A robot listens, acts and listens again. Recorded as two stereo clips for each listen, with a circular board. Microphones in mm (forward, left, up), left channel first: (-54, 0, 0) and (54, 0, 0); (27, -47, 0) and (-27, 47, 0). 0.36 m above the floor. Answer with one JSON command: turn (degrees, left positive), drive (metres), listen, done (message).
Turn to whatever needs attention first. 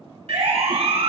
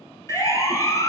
{"done": "Found it: a siren, straight ahead, 2 to 4 m away."}